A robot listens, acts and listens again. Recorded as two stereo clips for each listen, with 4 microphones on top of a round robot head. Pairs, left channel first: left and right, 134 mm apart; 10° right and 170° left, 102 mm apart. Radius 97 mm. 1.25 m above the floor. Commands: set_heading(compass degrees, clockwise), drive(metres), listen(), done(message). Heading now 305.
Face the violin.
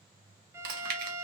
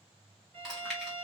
set_heading(105)
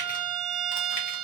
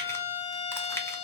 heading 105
done("Facing the violin.")